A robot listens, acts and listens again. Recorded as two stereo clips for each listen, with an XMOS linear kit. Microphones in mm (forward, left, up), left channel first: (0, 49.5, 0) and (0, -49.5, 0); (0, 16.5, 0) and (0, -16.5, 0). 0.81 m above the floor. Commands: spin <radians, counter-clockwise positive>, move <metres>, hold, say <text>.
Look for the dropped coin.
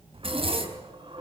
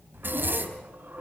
spin -1.05
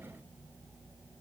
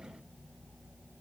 hold
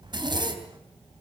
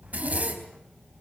say I heard a dropped coin, but can't make it out now. It was about straight ahead or 60° right.